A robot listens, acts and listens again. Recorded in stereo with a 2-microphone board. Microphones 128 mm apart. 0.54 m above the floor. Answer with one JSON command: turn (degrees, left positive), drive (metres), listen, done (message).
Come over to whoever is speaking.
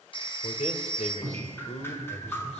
{"turn": 60}
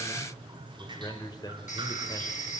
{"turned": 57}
{"turn": 35}
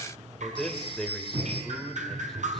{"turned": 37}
{"drive": 1.0}
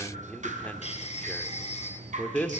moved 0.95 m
{"turn": 15}
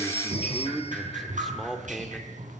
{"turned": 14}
{"drive": 1.0}
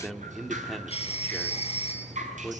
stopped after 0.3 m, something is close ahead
{"done": "Arrived at the man speaking, straight ahead."}